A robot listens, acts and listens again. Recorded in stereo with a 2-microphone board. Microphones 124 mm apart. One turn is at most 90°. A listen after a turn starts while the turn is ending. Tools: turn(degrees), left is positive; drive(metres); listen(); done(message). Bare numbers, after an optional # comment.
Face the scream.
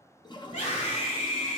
turn(90)
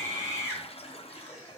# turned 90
# So it is at 10° right.
turn(-10)
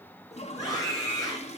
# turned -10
done("Facing the scream, 2 to 4 m away.")